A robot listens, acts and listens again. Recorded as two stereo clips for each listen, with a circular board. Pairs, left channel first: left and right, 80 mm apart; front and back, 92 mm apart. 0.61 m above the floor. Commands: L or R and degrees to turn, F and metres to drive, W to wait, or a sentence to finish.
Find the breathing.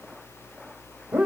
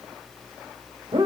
W
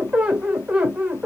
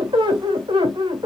W
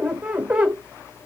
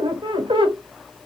I can't make out breathing to turn to.